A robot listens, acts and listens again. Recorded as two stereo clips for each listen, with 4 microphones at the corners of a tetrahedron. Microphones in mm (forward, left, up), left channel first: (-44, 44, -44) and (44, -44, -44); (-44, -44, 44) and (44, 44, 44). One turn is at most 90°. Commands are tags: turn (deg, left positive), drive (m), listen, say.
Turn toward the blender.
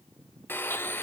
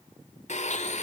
<turn deg="-90"/>
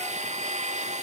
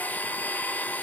<turn deg="-60"/>
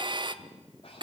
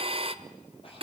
<say>Facing the blender, 1 to 2 m away.</say>